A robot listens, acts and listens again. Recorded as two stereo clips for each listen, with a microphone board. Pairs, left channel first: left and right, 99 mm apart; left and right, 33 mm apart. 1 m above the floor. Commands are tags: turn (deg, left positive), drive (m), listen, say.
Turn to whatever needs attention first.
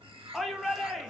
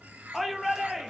<turn deg="30"/>
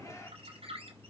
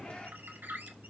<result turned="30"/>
<listen/>
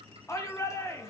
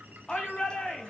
<turn deg="150"/>
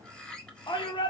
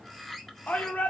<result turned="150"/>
<turn deg="55"/>
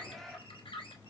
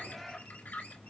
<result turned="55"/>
<listen/>
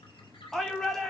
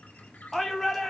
<say>Found it: a shout, straight ahead.</say>